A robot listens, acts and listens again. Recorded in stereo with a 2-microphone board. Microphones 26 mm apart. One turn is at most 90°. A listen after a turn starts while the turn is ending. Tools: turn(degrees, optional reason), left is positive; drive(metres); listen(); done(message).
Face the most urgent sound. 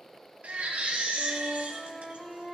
turn(degrees=-65, reason="The baby crying: about 65° right or 115° right.")
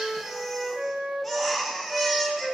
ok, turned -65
done("Found it: a baby crying, straight ahead, 1 to 2 m away.")